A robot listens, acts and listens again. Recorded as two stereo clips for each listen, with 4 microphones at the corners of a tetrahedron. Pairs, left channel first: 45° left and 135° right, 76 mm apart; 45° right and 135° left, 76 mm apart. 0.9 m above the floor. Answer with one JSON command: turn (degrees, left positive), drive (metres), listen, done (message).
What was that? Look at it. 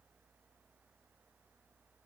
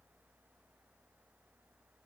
{"listen": true}
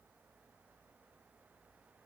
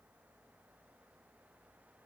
{"listen": true}
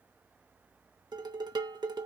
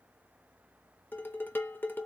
{"turn": -110}
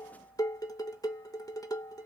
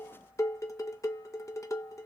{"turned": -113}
{"done": "Found it: dishes clattering, straight ahead, 1 to 2 m away."}